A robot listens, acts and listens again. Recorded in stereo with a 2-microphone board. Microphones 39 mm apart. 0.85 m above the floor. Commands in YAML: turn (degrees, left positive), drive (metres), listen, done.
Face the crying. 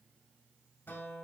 listen: true
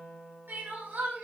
turn: -70
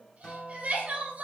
turn: -40
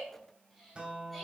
listen: true
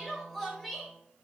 done: "Facing the crying, 2 to 4 m away."